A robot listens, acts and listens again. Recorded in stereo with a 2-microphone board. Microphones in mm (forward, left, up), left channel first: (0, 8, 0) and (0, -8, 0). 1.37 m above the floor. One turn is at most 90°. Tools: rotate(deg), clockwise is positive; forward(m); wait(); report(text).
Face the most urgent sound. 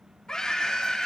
rotate(-50)
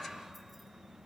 wait()
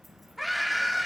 report("Facing the scream, 2 to 4 m away.")